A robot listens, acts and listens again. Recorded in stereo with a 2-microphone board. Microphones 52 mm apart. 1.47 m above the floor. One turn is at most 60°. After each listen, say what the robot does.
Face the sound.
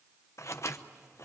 Turn 60° left.
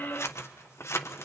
Turn 55° left.
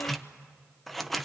Facing the scissors.